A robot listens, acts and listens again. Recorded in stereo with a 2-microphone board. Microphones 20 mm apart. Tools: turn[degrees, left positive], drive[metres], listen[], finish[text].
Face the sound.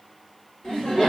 Thought: The laughter: about 60° left or 120° left.
Action: turn[60]
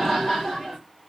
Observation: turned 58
Thought: So it is at 35° left.
Action: turn[35]
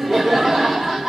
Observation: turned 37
Action: finish[Found it: laughter, straight ahead, 1 to 2 m away.]